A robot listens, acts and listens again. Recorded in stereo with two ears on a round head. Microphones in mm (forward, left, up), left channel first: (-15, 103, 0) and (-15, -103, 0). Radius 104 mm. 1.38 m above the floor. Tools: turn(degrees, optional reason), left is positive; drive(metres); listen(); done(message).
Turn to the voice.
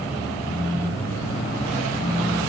listen()
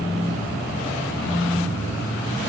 listen()
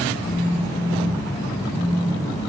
done("I can't make out anyone speaking, only a phone buzzing.")